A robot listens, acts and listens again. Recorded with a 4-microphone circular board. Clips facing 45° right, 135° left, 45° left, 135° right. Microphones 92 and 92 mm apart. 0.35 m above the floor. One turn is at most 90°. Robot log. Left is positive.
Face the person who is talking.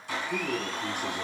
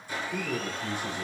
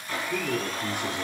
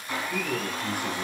note: The man speaking: 25° right.
cmd yaw -25
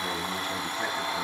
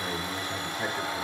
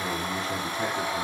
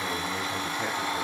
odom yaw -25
note: The man speaking is now 10° right.
cmd yaw -10
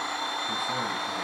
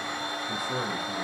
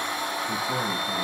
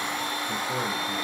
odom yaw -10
cmd idle
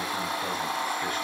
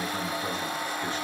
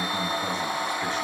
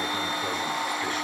cmd idle
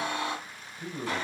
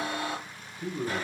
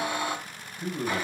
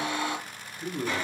note: The man speaking is now 25° right.
cmd yaw -25
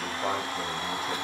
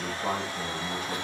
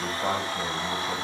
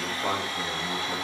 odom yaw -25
note: The man speaking is now 20° right.
cmd yaw -20
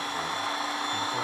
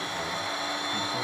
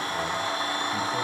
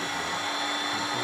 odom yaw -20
cmd idle
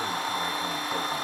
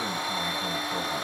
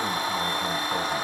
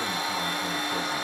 cmd idle
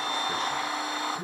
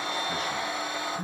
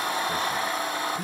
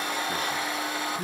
note: The man speaking is now 10° right.
cmd yaw -10
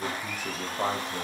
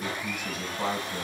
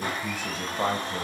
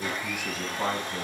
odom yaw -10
end: Facing the man speaking, 1 to 2 m away.